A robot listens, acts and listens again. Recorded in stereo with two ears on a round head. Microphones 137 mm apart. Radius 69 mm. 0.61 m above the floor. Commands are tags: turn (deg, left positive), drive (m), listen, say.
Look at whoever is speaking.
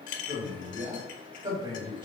<turn deg="-30"/>
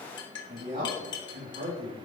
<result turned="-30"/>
<turn deg="-115"/>
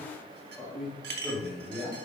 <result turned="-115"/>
<say>Facing the man speaking.</say>